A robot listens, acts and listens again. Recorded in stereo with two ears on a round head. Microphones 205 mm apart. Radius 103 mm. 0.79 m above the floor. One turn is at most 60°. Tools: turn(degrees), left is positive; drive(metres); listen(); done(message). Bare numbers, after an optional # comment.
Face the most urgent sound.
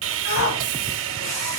# The shout: about 60° left or 120° left.
turn(60)
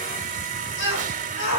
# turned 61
# So it is at 55° left.
turn(55)
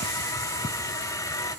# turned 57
listen()
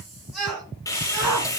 done("Facing the shout.")